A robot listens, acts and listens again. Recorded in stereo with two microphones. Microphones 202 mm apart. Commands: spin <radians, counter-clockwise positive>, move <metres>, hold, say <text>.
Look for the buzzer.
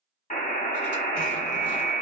spin 0.70
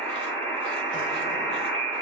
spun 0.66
say Found it: a buzzer, straight ahead.